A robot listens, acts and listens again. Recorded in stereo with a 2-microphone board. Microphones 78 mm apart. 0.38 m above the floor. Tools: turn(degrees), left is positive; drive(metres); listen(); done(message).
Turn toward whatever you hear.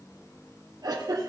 turn(degrees=-60)
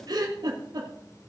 turn(degrees=-60)
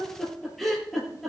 done("Facing the giggle.")